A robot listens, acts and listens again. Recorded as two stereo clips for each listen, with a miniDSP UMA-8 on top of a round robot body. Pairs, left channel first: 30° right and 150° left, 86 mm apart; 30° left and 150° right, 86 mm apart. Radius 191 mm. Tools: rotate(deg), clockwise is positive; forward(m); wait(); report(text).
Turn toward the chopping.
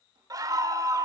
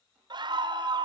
wait()
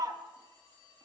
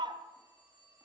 wait()
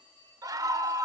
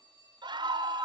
report("I can't make out chopping, only a phone ringing and a scream.")